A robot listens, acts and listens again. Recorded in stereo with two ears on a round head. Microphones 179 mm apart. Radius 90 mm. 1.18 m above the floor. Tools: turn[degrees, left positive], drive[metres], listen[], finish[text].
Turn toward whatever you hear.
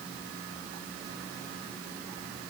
Action: listen[]
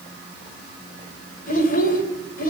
Thought: The child speaking: about 50° left or 130° left.
Action: turn[50]
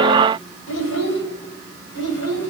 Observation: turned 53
Thought: So it is at 70° left.
Action: turn[70]
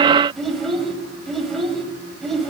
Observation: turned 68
Action: finish[Facing the child speaking, over 4 m away.]